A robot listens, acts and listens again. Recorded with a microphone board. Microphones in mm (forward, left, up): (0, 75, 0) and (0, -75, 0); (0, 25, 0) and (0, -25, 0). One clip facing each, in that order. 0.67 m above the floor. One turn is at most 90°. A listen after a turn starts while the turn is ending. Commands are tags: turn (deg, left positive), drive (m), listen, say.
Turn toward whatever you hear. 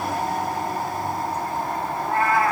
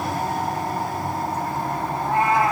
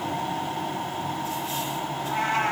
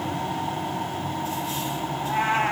<turn deg="-20"/>
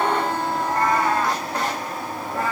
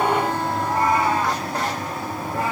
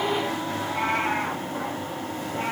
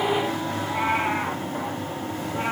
<turn deg="-15"/>
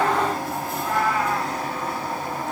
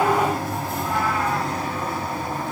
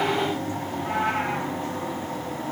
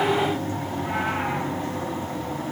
<listen/>
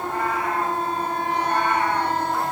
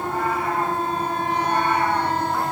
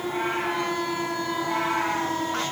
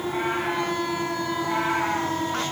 <listen/>
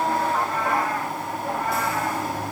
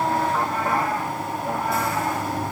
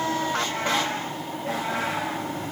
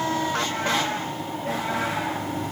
<say>I heard a cat meowing, but can't make it out now. It was about straight ahead or 150° right.</say>